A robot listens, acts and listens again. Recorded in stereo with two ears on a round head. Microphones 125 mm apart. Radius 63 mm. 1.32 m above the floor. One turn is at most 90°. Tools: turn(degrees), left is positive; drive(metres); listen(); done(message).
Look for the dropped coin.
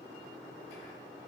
listen()
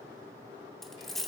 turn(degrees=30)
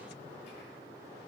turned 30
listen()
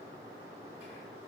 done("I heard a dropped coin, but can't make it out now. It was about 30° right or 150° left.")